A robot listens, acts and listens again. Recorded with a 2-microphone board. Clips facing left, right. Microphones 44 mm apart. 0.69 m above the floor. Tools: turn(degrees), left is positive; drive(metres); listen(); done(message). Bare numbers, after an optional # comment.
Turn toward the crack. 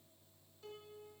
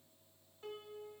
listen()
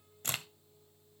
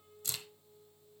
# The crack: about 50° left or 130° left.
turn(50)
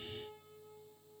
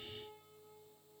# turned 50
listen()
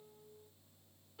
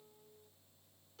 done("I heard a crack, but can't make it out now. It was about straight ahead or 80° left.")